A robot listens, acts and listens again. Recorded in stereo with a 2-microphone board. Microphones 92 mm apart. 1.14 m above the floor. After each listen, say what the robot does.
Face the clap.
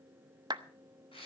Turn 50° right.
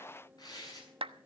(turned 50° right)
Turn 80° right.
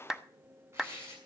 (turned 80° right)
Facing the clap, under 1 m away.